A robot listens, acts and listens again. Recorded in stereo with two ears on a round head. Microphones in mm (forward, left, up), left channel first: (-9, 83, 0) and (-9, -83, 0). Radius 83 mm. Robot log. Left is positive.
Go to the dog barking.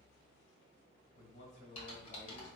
cmd idle
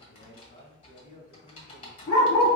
cmd yaw +90
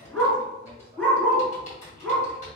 cmd fwd 1.0
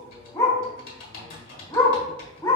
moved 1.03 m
note: The dog barking is now 20° left.
cmd yaw +20
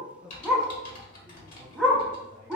cmd fwd 1.0
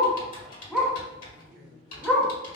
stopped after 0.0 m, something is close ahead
end: Arrived at the dog barking, straight ahead.